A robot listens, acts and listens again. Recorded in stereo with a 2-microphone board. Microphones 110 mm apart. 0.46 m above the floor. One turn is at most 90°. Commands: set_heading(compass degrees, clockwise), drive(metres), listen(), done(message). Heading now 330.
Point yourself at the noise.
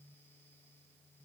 listen()
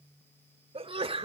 set_heading(25)
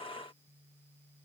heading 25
listen()
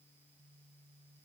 done("I heard a sneeze, but can't make it out now. It was about straight ahead or 70° right.")